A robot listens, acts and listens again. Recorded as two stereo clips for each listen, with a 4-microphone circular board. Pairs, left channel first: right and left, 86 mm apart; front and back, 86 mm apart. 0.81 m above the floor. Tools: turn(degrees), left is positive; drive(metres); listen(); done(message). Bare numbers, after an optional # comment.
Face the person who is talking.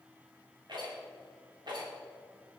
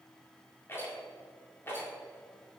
listen()
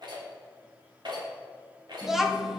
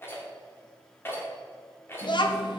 done("Found it: a child speaking, straight ahead, 1 to 2 m away.")